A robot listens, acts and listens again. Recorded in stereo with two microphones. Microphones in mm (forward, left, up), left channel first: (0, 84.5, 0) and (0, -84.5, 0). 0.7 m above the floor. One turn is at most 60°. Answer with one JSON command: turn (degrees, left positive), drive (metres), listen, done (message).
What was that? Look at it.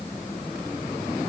{"listen": true}
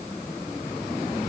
{"listen": true}
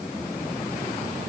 {"done": "I can't make out anything."}